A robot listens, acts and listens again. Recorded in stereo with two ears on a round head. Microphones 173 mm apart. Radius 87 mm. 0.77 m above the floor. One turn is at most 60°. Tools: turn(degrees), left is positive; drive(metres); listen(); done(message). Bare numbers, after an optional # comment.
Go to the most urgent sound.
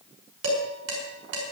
listen()
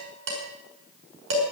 listen()
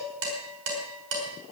done("I can't make out anything urgent to turn to.")